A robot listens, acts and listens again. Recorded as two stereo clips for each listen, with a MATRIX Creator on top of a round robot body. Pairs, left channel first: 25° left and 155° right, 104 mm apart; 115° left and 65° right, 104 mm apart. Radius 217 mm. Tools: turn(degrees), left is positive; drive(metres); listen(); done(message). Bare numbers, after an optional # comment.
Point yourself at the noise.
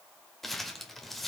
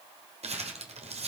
# The crumpling: 65° right.
turn(-65)
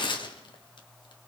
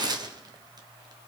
# The crumpling is now 20° right.
turn(-20)
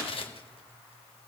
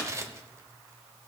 done("Found it: crumpling, straight ahead, 1 to 2 m away.")